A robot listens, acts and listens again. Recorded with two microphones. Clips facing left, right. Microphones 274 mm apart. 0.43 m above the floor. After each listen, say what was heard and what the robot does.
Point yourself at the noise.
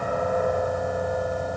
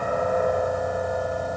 Keep listening.
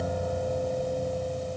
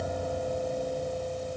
Keep listening.
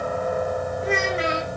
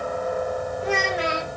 The child speaking: about 25° left or 155° left. Turn 25° left.
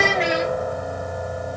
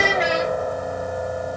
Found it: a child speaking, straight ahead.